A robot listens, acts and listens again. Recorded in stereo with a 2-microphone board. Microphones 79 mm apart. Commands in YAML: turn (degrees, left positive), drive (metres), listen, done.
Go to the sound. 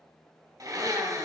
turn: -55
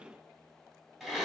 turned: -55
turn: -10
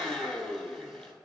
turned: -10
drive: 1.0
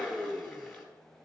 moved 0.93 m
drive: 1.0
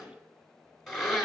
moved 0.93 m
drive: 1.0
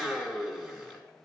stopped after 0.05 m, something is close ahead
done: "Arrived at the blender, straight ahead."